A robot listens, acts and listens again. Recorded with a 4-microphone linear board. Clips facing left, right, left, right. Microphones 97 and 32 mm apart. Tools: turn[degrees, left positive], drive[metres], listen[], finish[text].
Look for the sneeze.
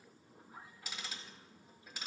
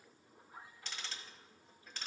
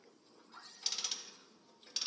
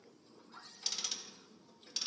Action: listen[]
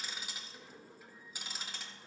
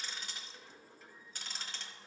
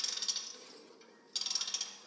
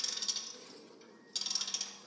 Action: listen[]
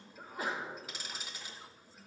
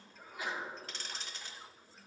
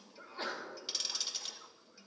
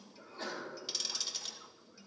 Thought: The sneeze: about 40° left or 140° left.
Action: turn[40]
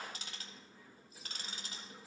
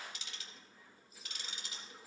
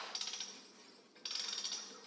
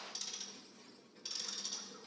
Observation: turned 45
Action: listen[]
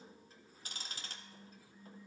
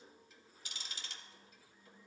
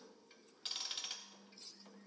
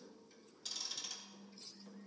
Action: finish[I heard a sneeze, but can't make it out now. It was about 5° right or 95° left.]